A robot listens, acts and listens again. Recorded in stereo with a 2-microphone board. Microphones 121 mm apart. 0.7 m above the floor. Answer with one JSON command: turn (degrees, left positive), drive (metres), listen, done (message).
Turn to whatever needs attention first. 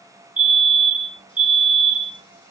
{"turn": -30}
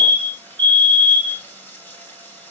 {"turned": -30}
{"turn": -140}
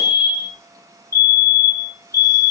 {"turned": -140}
{"turn": 25}
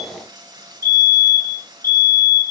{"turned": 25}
{"turn": 20}
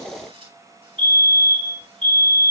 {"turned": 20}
{"done": "Facing the fire alarm."}